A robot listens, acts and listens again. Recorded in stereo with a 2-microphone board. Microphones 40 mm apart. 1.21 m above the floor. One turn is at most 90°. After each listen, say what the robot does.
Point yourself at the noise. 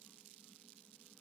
Keep listening.
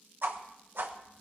Turn 60° right.
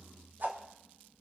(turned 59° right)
Turn 55° right.
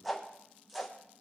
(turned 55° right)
Found it: a whoosh, straight ahead, 1 to 2 m away.